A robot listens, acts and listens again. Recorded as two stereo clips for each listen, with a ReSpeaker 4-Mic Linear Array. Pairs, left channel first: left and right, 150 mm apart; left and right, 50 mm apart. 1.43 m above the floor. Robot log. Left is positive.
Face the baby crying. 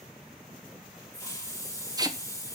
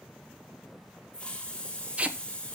cmd idle
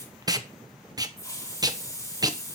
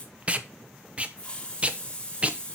cmd idle
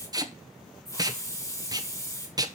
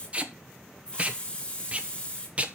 end: I can't make out a baby crying to turn to.